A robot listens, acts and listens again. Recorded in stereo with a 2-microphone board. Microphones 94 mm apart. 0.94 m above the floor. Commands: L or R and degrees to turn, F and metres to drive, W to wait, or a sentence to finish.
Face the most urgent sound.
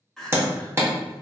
L30
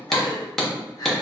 L140
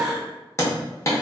Facing the crying.